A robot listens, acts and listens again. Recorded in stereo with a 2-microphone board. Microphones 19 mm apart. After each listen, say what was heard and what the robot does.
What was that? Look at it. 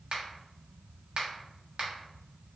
The finger snap: about 60° right or 120° right. Turn 60° right.
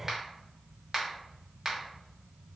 So it is at 25° right. Turn 25° right.
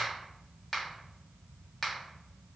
The finger snap is now 10° left. Turn 10° left.
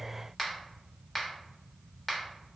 Facing the finger snap.